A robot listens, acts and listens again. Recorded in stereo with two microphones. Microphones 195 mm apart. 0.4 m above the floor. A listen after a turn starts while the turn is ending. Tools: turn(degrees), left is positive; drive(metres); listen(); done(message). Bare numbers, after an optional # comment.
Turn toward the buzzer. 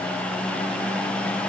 listen()
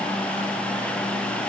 listen()
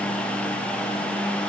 done("I can't make out a buzzer.")